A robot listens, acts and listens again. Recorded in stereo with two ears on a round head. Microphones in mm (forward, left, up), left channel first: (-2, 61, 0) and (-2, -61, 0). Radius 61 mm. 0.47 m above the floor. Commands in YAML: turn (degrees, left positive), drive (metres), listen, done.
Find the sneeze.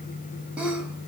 turn: -30
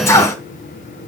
turn: 20
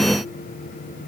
done: "Facing where the sneeze came from. I can't hear it now."